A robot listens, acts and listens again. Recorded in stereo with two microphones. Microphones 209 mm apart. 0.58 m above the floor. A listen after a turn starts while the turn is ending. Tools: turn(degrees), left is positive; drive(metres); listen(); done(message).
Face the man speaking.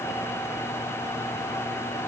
listen()
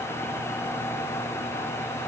listen()
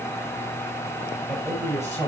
turn(degrees=30)
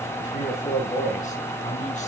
turn(degrees=140)
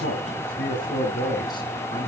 turn(degrees=20)
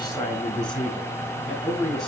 done("Facing the man speaking, 2 to 4 m away.")